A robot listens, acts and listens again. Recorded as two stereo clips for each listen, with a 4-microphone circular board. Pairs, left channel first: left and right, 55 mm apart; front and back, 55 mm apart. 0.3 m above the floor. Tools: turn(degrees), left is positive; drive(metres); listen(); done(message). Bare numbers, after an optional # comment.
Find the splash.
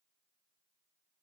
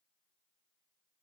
listen()
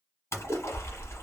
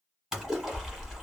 # The splash: 105° left.
turn(105)
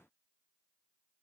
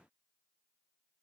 done("I heard a splash from this way, but can't make it out now.")